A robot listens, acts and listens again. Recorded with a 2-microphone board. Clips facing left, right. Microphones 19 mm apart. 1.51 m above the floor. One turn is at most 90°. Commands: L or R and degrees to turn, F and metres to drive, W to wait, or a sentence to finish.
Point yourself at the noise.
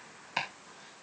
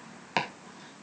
R45
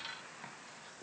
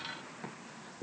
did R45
Facing the chopping, 2 to 4 m away.